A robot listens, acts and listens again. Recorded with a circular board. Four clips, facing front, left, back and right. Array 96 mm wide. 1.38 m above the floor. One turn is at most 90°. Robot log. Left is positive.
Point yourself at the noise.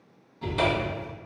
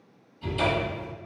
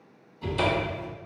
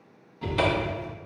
note: The cupboard door: 65° right.
cmd yaw -65
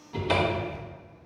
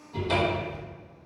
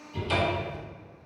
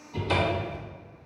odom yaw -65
end: Found it: a cupboard door, straight ahead, under 1 m away.